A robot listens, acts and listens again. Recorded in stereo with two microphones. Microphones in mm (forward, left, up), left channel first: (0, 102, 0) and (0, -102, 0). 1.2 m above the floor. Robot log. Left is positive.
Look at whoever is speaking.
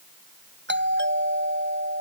cmd idle
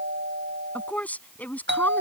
cmd yaw +30
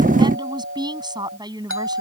note: So it is at 20° right.
cmd yaw -20
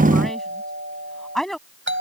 end: Facing the woman speaking.